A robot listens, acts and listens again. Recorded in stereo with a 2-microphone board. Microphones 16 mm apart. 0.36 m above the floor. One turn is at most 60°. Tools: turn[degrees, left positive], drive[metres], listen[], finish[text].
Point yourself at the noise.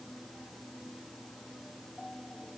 Action: listen[]
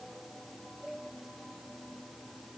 Action: listen[]
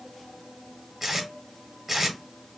Thought: The tape being pulled: about 25° right or 155° right.
Action: turn[-25]
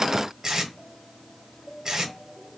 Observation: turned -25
Thought: So it is at 130° right.
Action: turn[-60]
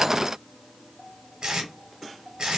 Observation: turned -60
Thought: The tape being pulled is now 65° right.
Action: turn[-60]
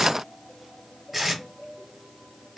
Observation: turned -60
Thought: The tape being pulled is now 10° right.
Action: turn[-10]
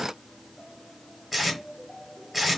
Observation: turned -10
Action: finish[Found it: tape being pulled, straight ahead.]